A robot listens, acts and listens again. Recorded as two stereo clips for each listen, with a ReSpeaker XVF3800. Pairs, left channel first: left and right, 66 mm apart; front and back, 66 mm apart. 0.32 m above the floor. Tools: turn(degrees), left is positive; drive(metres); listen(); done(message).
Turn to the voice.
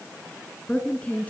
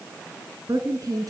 turn(degrees=160)
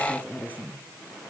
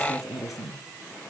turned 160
turn(degrees=30)
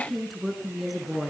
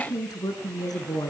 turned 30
done("Facing the woman speaking.")